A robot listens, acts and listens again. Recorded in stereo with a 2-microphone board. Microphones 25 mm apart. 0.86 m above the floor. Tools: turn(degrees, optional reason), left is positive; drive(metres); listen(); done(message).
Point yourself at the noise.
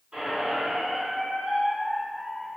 turn(degrees=-55, reason="The squeak: about 55° right or 125° right.")
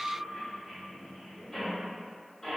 done("Found it: a squeak, straight ahead.")